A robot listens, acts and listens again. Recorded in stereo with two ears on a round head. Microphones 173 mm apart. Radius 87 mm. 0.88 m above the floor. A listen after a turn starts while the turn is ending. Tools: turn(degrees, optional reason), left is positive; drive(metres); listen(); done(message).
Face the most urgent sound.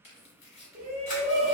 turn(degrees=-45, reason="The shout: about 45° right or 135° right.")
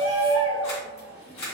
done("Found it: a shout, straight ahead, 1 to 2 m away.")